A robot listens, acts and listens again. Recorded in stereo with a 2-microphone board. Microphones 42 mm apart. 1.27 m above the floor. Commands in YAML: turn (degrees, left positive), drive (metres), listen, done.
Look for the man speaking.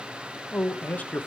turn: 40
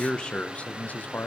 turn: 45
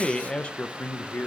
turn: 40
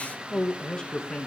turn: 20
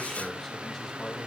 done: "Found it: a man speaking, straight ahead."